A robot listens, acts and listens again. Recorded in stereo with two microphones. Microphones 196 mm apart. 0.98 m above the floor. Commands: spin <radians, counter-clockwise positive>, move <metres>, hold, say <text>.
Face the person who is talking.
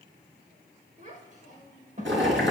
spin -0.70
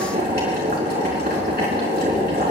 hold
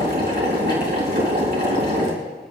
hold
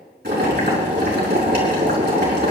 say I heard a child speaking, but can't make it out now. It was about straight ahead or 100° right.